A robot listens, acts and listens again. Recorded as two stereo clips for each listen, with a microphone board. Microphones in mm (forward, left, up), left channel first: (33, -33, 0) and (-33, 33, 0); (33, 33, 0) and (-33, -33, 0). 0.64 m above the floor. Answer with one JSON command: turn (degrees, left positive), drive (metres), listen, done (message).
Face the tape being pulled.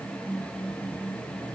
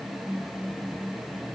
{"listen": true}
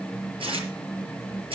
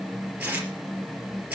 {"turn": 145}
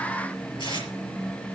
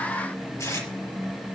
{"turn": -15}
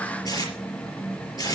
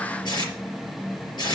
{"done": "Facing the tape being pulled."}